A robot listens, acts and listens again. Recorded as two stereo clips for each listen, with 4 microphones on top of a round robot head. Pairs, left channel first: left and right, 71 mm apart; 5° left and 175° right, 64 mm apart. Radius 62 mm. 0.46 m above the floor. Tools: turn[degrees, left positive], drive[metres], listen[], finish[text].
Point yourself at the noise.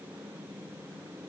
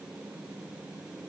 Action: listen[]
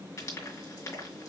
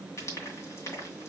Thought: The frying: 45° left.
Action: turn[45]
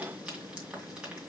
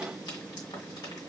Thought: The frying is now 15° right.
Action: turn[-15]
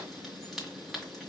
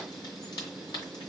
Action: finish[Facing the frying, 2 to 4 m away.]